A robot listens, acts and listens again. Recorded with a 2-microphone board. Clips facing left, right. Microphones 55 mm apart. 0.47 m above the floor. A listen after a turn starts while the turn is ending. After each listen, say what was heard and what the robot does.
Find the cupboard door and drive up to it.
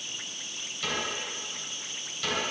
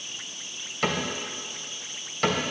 The cupboard door: about 50° right or 130° right. Turn 50° right.
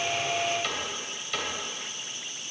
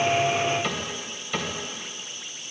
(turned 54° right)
Drive 1.0 m forward.
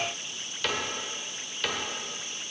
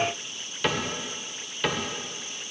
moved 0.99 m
The cupboard door is now 15° right. Turn 15° right.
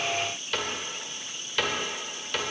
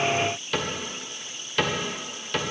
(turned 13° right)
Drive 1.0 m forward.
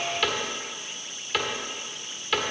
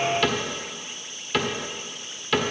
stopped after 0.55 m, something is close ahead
I am next to the cupboard door.